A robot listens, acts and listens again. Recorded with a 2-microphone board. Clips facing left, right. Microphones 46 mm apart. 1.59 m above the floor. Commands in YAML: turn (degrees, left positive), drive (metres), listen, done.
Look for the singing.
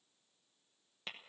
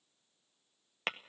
listen: true
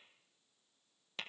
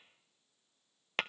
listen: true
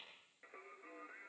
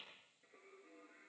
turn: 60
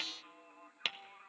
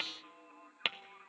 done: "Facing the singing."